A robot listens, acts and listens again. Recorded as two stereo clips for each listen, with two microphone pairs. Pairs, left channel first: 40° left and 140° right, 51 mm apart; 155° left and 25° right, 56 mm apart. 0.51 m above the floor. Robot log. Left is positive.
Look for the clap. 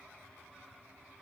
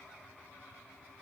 cmd idle
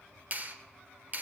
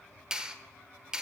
note: The clap: 95° right.
cmd yaw -95
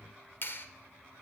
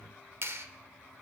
note: The clap is now 10° left.
cmd yaw +10
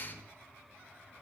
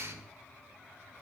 end: Facing the clap.